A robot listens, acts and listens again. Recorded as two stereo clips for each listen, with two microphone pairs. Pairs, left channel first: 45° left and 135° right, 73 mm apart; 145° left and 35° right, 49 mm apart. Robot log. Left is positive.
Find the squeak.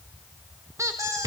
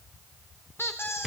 note: The squeak: 175° left.
cmd yaw +175
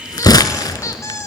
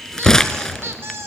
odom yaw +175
end: Facing the squeak.